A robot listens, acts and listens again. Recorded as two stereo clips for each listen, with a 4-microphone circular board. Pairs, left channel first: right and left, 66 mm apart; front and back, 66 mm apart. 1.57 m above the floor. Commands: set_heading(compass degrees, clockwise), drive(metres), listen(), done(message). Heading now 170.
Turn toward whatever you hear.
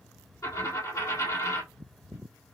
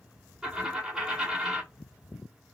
set_heading(265)
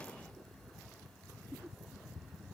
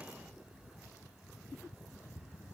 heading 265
done("Facing where the dropped coin came from. I can't hear it now.")